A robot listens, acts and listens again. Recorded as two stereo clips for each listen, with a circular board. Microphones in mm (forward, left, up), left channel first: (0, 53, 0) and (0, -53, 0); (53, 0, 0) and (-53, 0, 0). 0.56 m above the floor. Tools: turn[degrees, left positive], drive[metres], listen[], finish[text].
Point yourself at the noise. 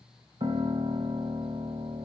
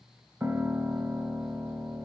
Thought: The piano: 110° right.
Action: turn[-110]
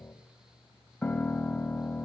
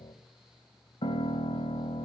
Thought: The piano is now 10° left.
Action: turn[10]
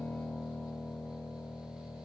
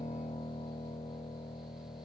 Action: finish[Facing the piano.]